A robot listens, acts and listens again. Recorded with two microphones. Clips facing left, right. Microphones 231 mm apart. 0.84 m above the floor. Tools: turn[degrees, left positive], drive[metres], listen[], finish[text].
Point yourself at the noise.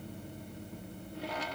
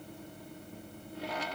Action: listen[]
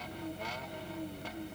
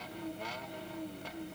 Action: listen[]
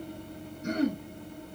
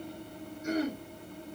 Thought: The throat clearing: about 70° left or 110° left.
Action: turn[70]
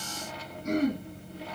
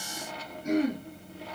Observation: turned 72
Action: finish[Found it: throat clearing, straight ahead.]